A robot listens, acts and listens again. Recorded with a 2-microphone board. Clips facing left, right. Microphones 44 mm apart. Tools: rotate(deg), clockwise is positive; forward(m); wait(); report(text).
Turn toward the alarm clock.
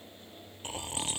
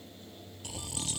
wait()
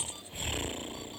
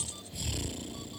wait()
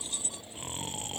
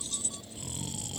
report("I can't make out an alarm clock to turn to.")